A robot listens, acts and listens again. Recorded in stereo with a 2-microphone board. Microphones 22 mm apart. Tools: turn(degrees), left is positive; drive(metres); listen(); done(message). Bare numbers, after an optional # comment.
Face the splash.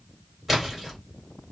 turn(-30)
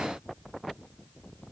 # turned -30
listen()
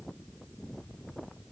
done("I heard a splash, but can't make it out now. It was about 25° left or 145° right.")